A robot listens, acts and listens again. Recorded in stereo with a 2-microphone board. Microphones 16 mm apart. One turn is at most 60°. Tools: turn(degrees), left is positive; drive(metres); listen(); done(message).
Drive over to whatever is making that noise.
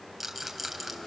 turn(degrees=-30)
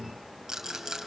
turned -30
turn(degrees=-60)
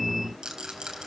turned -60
turn(degrees=-60)
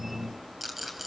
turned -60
turn(degrees=-15)
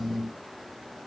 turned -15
listen()
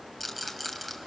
drive(metres=1.0)
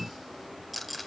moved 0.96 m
drive(metres=1.0)
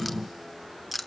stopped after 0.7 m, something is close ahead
done("I am next to the rattle.")